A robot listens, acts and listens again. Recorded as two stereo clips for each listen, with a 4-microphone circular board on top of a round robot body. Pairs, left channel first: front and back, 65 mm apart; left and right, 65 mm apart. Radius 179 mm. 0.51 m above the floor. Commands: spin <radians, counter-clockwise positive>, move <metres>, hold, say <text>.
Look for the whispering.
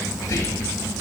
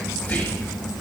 spin 0.52
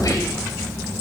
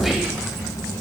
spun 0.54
say Found it: whispering, straight ahead, 1 to 2 m away.